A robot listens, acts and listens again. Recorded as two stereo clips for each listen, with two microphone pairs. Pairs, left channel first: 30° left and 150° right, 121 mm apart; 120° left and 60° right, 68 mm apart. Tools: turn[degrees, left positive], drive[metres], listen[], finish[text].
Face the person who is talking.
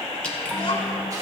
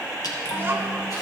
Action: finish[Found it: a child speaking, straight ahead, 2 to 4 m away.]